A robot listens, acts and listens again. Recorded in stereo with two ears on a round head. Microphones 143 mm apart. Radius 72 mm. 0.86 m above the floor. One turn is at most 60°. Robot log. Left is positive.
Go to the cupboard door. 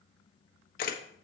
cmd idle
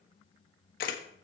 cmd idle
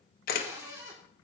note: The cupboard door: about 20° right or 160° right.
cmd yaw -20
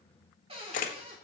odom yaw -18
note: So it is at 145° right.
cmd yaw -60
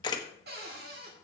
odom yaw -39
note: The cupboard door is now 105° right.
cmd yaw -60
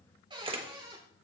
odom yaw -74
note: The cupboard door is now 30° right.
cmd yaw -30
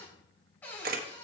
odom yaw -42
note: The cupboard door is now 10° left.
cmd yaw +10
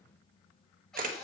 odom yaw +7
cmd fwd 1.0
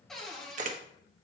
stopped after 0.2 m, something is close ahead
end: Something is in my way. I am facing the cupboard door but have not reached it.